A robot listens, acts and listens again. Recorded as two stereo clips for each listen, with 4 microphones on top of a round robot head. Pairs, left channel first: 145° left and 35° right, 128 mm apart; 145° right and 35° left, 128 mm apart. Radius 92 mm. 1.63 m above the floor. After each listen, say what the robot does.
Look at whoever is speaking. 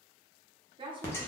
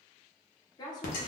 Turn 85° right.
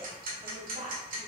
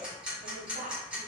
Facing the woman speaking.